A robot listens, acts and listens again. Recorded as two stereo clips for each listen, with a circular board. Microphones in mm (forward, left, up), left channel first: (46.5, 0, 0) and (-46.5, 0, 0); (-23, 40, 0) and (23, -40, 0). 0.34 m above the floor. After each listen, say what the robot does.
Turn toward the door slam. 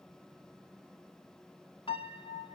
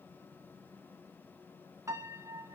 Keep listening.
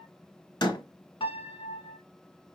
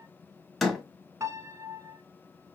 Turn 30° left.
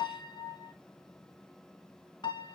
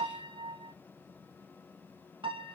Facing where the door slam came from. I can't hear it now.